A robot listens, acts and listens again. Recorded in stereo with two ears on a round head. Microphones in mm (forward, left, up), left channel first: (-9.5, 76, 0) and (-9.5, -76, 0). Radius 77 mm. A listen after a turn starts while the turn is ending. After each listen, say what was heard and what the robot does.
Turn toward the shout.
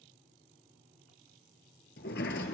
Keep listening.
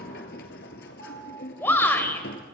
Turn 30° left.
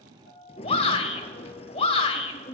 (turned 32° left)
So it is at 135° left. Turn 135° left.
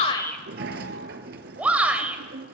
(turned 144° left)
The shout is now 10° right. Turn 10° right.
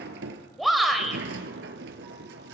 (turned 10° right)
Facing the shout.